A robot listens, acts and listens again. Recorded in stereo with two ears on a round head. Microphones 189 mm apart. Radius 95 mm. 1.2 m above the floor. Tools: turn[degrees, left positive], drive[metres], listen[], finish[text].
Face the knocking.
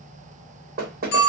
Thought: The knocking: about 45° right or 135° right.
Action: turn[-45]
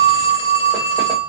Action: listen[]
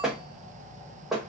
Action: finish[Facing the knocking, under 1 m away.]